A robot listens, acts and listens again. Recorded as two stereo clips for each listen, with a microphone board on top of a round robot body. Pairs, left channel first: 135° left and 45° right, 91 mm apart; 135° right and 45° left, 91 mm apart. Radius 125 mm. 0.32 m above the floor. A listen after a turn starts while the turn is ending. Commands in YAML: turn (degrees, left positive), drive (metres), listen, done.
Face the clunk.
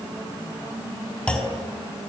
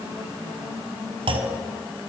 turn: 55
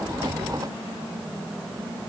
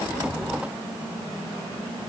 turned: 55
done: "Facing where the clunk came from. I can't hear it now."